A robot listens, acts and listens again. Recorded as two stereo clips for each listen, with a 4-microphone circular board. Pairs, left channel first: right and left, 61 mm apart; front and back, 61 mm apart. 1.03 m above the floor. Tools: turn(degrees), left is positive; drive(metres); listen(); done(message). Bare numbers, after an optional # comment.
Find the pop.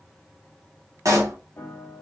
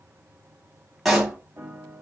# The pop: 95° left.
turn(95)
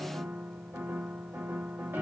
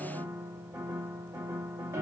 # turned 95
done("Facing where the pop came from. I can't hear it now.")